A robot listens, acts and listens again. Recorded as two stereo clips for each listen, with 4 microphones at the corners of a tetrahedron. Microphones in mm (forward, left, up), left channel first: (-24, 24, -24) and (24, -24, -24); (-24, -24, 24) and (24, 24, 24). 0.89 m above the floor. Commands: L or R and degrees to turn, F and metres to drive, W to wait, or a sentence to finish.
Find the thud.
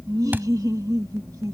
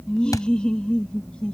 R105
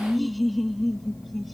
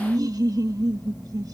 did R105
I heard a thud from this way, but can't make it out now.